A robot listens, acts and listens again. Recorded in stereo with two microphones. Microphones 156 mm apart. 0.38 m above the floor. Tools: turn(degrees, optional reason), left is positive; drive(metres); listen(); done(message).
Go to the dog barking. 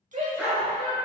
turn(degrees=-30)
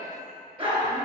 turn(degrees=-145, reason="So it is at 145° right.")
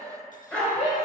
drive(metres=1.0)
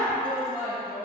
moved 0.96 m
turn(degrees=15, reason="The dog barking is now 15° left.")
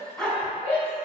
drive(metres=1.0)
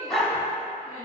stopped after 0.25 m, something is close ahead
done("Arrived at the dog barking, straight ahead.")